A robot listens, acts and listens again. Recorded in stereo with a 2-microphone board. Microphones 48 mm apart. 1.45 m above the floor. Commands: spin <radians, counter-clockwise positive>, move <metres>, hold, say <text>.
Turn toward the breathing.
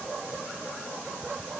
hold
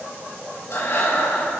spin 1.05
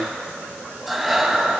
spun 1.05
say Facing the breathing.